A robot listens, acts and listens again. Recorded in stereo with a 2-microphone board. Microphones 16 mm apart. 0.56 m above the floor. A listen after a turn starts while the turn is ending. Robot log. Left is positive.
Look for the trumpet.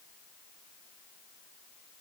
cmd idle
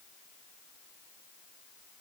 cmd idle
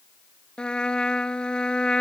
cmd yaw +90
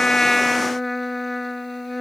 end: Facing the trumpet.